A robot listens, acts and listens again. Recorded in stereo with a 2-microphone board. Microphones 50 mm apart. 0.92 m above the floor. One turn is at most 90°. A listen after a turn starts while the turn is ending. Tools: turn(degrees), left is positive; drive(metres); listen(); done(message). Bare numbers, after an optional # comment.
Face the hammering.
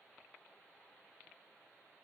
listen()
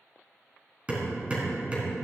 # The hammering: about 25° right or 155° right.
turn(-25)
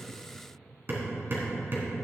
# So it is at 135° right.
turn(-90)
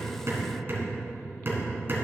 # The hammering is now 45° right.
turn(-45)
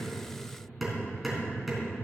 done("Found it: hammering, straight ahead.")